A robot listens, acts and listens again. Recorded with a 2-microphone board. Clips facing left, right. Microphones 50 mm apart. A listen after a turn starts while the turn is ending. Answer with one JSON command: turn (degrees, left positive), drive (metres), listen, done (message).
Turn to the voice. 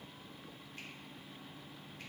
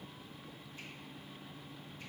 {"listen": true}
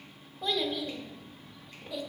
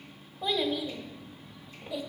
{"turn": -30}
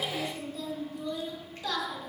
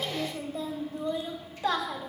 {"turn": -145}
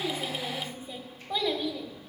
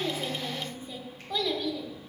{"turn": 10}
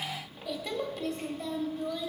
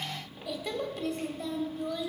{"done": "Facing the child speaking."}